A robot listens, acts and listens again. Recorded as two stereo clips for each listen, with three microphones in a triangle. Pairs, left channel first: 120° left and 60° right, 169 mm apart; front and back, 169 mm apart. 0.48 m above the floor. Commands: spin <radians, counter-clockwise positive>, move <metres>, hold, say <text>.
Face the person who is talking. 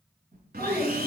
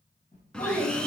spin 0.70
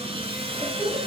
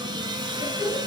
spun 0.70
spin 0.17
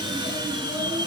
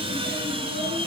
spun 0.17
hold
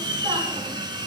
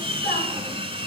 hold
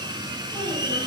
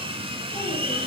say I heard a child speaking from this way, but can't make it out now.